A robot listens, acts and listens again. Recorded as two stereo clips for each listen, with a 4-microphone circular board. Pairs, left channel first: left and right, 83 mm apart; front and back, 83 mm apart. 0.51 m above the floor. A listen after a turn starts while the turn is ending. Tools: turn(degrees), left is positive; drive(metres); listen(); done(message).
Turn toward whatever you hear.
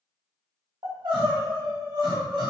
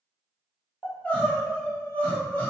turn(degrees=-70)
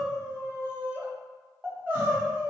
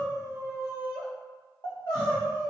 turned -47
turn(degrees=-25)
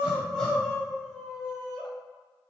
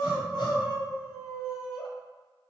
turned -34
turn(degrees=10)
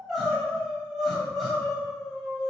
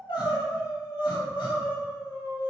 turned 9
done("Facing the crying, 2 to 4 m away.")